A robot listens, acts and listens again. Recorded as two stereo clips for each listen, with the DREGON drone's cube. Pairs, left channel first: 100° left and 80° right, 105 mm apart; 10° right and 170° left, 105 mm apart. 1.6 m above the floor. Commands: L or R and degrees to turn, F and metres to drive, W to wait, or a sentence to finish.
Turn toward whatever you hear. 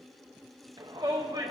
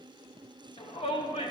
R25
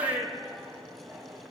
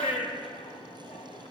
Facing the shout, under 1 m away.